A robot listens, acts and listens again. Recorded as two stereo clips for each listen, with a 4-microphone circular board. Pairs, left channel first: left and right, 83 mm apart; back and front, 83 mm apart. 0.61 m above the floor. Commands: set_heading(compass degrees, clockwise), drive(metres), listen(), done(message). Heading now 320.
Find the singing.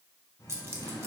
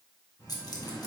set_heading(190)
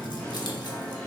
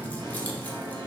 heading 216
done("Facing the singing, 2 to 4 m away.")